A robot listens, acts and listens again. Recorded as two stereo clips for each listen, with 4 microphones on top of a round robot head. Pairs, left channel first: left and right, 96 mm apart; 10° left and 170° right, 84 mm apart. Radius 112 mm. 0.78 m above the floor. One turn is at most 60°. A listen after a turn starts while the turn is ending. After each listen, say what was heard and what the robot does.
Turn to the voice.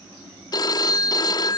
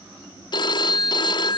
Keep listening.
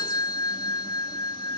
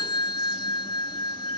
Keep listening.
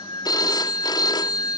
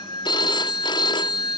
I can't make out anyone speaking, only a phone ringing.